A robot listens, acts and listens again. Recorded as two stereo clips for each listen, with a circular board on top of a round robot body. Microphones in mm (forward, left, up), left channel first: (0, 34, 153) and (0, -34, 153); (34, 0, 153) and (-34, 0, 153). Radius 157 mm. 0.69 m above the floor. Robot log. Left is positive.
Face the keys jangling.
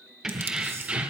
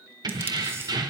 note: The keys jangling: 160° right.
cmd yaw -160
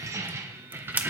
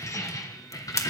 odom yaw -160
note: The keys jangling is now 30° right.
cmd yaw -30
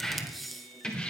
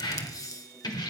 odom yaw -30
note: The keys jangling is now 15° left.
cmd yaw +15
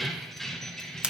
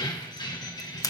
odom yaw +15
note: The keys jangling is now 10° left.
cmd yaw +10
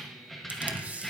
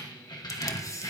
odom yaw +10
end: Found it: keys jangling, straight ahead, 2 to 4 m away.